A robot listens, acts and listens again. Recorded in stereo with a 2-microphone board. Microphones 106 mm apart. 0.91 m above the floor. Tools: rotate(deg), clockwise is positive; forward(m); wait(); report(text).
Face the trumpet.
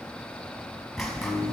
wait()
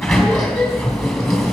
wait()
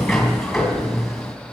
report("I can't make out a trumpet to turn to.")